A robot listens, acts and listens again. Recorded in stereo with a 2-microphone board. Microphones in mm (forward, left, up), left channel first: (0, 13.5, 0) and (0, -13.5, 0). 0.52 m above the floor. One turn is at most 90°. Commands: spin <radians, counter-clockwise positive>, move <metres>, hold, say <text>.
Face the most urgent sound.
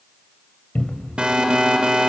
spin -0.70
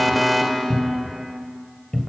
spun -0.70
say Facing the alarm.